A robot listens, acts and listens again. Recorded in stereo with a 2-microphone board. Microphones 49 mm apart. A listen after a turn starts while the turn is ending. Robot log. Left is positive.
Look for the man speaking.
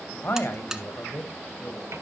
note: The man speaking: about 50° left or 130° left.
cmd yaw +50
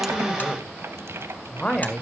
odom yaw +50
note: So it is at 20° left.
cmd yaw +20
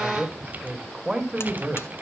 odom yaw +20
note: The man speaking is now 25° right.
cmd yaw -25
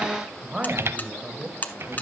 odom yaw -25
note: The man speaking is now 25° right.
cmd yaw -25
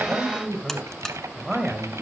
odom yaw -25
end: Facing the man speaking, 2 to 4 m away.